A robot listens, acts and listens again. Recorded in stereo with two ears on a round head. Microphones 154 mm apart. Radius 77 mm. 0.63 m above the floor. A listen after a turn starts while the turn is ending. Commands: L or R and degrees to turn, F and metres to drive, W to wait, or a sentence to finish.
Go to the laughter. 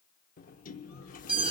W
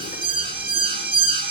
W
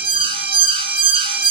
I can't make out laughter, only a sliding door and an alarm.